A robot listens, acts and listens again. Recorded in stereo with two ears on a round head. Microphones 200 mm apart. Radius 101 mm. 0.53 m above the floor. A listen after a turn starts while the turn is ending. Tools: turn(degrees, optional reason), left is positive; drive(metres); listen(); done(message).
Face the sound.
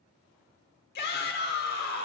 turn(degrees=45, reason="The shout: about 45° left or 135° left.")
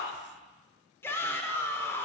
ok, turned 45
turn(degrees=15, reason="So it is at 15° left.")
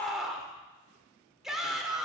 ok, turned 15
done("Found it: a shout, straight ahead.")